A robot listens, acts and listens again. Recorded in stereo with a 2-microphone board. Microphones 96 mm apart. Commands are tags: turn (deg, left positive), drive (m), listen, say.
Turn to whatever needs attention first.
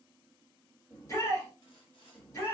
<turn deg="35"/>
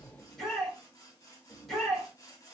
<say>Found it: a shout, straight ahead, 2 to 4 m away.</say>